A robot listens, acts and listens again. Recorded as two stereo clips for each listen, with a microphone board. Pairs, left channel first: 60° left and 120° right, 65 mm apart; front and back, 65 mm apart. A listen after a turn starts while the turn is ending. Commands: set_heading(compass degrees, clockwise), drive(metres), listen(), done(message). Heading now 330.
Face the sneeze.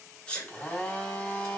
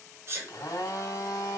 set_heading(195)
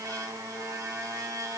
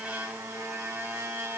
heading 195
done("I heard a sneeze from this way, but can't make it out now.")